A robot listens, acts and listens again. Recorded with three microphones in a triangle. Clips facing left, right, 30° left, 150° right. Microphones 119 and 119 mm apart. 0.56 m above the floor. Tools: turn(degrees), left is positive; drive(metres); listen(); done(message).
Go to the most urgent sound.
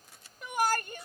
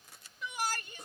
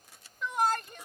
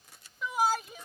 turn(degrees=125)
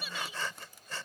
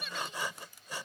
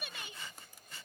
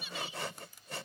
drive(metres=1.0)
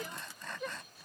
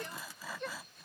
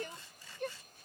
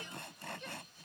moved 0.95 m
drive(metres=1.0)
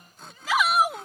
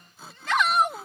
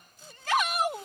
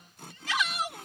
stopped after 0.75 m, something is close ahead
done("Arrived at the shout, straight ahead.")